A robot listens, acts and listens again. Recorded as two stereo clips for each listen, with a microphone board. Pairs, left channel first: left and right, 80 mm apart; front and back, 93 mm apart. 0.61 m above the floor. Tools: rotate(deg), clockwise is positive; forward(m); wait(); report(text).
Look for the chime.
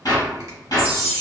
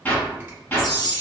rotate(-140)
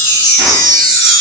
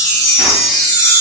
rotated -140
rotate(-45)
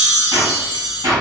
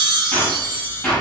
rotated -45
report("Facing the chime.")